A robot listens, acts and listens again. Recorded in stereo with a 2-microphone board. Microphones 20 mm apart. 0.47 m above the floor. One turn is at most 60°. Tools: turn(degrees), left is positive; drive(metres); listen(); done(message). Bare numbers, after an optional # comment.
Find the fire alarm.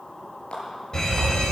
# The fire alarm: about 35° left or 145° left.
turn(35)
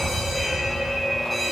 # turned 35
# So it is at 10° left.
turn(10)
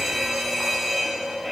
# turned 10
done("Facing the fire alarm.")